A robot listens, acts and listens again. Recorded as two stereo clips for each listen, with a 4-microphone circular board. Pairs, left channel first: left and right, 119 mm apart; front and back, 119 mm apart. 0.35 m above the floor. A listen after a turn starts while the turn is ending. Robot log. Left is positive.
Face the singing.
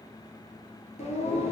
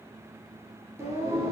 note: The singing: 115° left.
cmd yaw +115
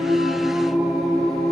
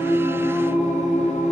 end: Found it: singing, straight ahead.